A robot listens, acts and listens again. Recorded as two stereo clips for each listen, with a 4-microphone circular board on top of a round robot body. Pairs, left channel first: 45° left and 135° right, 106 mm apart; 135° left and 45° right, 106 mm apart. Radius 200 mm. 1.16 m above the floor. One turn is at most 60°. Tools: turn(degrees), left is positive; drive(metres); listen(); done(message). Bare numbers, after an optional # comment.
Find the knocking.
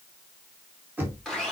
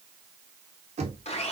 # The knocking: 60° right.
turn(-60)
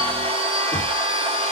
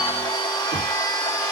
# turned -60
listen()
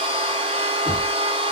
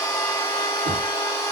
listen()
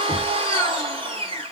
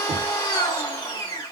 done("Facing where the knocking came from. I can't hear it now.")